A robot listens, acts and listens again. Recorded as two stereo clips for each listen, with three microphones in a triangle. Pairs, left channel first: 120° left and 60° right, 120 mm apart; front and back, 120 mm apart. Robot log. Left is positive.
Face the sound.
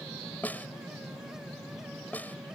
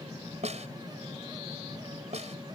note: The snare drum: 165° right.
cmd yaw -165
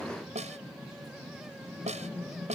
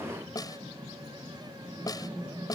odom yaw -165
note: The snare drum is now 55° right.
cmd yaw -55
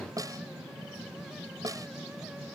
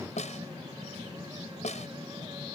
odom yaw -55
end: Found it: a snare drum, straight ahead.